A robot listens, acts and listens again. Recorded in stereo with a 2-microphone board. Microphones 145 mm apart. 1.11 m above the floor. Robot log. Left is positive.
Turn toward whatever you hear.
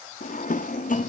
note: The drawer: about 65° left or 115° left.
cmd yaw +65
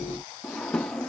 end: Facing the drawer.